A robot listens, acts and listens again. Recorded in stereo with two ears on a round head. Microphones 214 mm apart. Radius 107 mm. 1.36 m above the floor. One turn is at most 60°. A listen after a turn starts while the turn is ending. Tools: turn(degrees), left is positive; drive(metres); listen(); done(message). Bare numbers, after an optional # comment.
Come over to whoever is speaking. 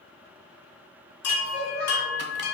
# The child speaking: about 30° left or 150° left.
turn(30)
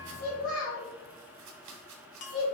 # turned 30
# So it is at 120° left.
turn(60)
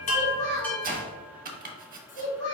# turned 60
# The child speaking is now 55° left.
turn(55)
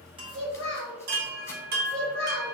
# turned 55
drive(1.0)
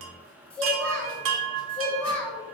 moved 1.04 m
drive(1.0)
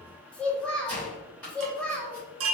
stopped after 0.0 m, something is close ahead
done("Arrived at the child speaking, straight ahead.")